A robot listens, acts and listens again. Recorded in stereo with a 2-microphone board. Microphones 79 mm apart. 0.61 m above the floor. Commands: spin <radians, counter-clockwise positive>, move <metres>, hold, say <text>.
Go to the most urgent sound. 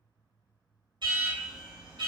spin -1.22
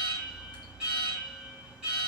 spin -0.26
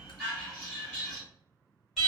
move 1.0
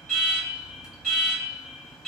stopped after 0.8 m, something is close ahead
say Arrived at the alarm, straight ahead.